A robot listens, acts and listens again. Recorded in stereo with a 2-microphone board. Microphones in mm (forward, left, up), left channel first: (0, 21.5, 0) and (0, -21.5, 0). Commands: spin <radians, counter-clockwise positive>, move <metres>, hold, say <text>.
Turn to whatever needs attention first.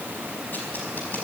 hold
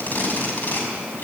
hold
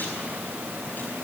say I can't make out anything urgent, only tape being pulled.